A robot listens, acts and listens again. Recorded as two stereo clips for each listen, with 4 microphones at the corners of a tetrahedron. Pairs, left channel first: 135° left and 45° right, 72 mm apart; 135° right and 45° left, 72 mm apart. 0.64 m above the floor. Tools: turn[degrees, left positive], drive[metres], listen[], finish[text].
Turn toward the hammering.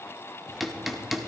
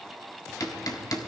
Thought: The hammering: 130° right.
Action: turn[-130]
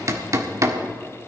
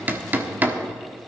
Thought: The hammering is now 15° right.
Action: turn[-15]
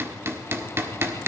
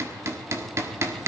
Action: finish[Found it: hammering, straight ahead.]